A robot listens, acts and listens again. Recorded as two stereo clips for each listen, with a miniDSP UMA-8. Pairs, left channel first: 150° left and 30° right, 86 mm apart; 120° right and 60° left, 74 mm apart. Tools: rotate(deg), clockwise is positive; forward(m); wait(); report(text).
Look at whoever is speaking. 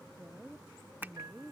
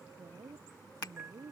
rotate(-50)
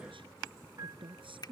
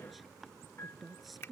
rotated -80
rotate(30)
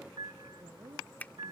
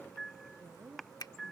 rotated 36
report("Found it: a woman speaking, straight ahead.")